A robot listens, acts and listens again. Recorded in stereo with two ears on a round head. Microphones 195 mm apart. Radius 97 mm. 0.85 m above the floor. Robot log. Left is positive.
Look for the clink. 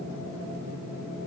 cmd idle
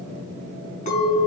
note: The clink: about 35° left or 145° left.
cmd yaw +35
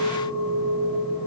end: Facing the clink, over 4 m away.